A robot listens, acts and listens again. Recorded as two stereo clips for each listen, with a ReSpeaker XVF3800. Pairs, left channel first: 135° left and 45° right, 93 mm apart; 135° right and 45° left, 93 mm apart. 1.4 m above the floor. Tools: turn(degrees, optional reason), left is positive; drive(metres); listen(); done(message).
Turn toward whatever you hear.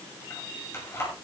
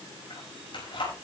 turn(degrees=-160, reason="The keys jangling: 160° right.")
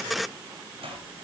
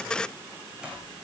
turn(degrees=-35, reason="The keys jangling is now 35° right.")
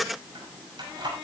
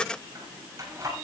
turn(degrees=-10, reason="The keys jangling is now 10° right.")
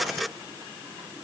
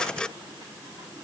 listen()
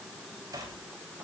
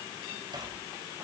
done("Found it: keys jangling, straight ahead, over 4 m away.")